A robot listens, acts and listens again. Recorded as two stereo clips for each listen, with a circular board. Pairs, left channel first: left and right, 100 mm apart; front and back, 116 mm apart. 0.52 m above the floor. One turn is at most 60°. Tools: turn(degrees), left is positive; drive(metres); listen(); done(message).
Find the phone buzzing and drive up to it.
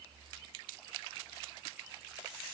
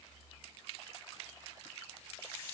listen()
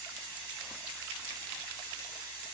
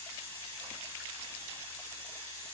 listen()
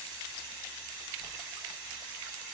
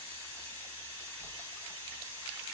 done("I can't make out a phone buzzing to turn to.")